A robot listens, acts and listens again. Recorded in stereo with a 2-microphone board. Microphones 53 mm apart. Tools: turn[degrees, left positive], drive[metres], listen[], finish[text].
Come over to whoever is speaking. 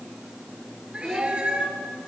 Action: turn[30]
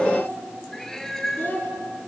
Thought: So it is at 140° left.
Action: turn[140]
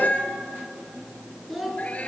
Action: drive[1.0]
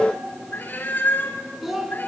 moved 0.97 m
Action: drive[1.0]
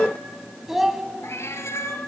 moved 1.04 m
Thought: The child speaking is now 10° right.
Action: turn[-10]
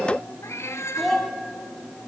Action: drive[1.0]
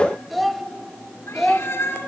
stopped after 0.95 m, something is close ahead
Action: finish[Arrived at the child speaking, straight ahead.]